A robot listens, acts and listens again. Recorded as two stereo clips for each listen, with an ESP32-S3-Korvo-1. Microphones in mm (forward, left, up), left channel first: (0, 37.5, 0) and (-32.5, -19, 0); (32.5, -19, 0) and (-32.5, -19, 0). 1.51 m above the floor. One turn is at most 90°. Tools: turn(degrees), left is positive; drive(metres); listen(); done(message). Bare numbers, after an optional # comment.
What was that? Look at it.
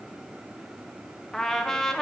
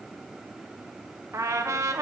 # The trumpet: 145° left.
turn(90)
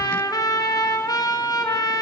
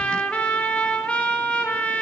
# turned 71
# The trumpet is now 70° left.
turn(70)
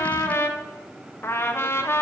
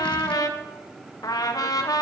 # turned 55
# The trumpet is now 15° left.
turn(15)
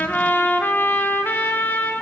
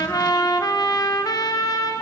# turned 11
done("Found it: a trumpet, straight ahead.")